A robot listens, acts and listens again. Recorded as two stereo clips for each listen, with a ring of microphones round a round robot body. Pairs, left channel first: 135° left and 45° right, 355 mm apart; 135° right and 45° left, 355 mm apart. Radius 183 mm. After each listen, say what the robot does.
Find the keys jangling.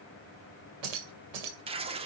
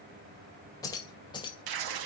Turn 60° right.
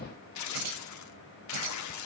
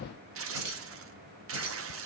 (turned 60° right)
Keep listening.
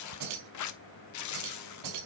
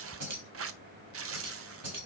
Found it: keys jangling, straight ahead.